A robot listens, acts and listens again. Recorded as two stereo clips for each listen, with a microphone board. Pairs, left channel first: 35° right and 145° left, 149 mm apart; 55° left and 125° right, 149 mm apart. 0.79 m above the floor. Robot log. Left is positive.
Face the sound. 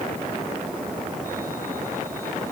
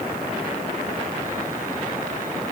cmd idle
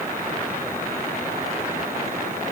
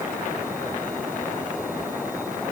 cmd idle
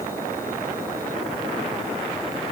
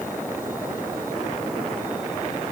end: I can't make out anything.